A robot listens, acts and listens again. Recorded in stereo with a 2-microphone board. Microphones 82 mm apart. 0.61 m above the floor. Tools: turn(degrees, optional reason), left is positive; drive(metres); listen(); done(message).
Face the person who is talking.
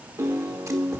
listen()
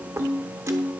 listen()
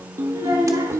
turn(degrees=-70, reason="The child speaking: about 70° right or 110° right.")
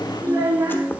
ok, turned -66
turn(degrees=-45, reason="So it is at 45° right.")
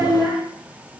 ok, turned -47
done("Facing the child speaking.")